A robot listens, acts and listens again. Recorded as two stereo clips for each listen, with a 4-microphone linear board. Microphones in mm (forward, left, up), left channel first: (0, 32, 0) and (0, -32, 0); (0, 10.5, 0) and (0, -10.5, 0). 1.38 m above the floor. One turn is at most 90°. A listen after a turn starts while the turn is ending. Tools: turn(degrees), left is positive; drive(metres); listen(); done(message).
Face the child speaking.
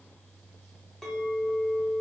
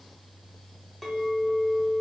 listen()
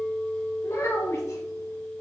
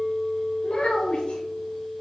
turn(degrees=50)
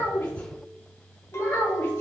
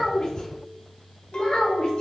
turn(degrees=40)
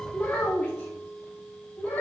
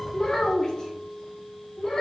turn(degrees=20)
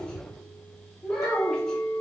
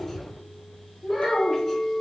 done("Found it: a child speaking, straight ahead.")